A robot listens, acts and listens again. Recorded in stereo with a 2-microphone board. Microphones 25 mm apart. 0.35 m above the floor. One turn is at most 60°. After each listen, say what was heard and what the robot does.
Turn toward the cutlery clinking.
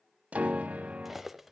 Turn 30° right.
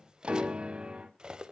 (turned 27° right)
So it is at 140° right. Turn 60° right.
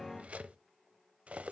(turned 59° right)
The cutlery clinking is now 80° right. Turn 60° right.
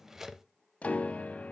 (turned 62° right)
The cutlery clinking is now 15° right. Turn 15° right.
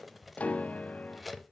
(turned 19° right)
Found it: cutlery clinking, straight ahead.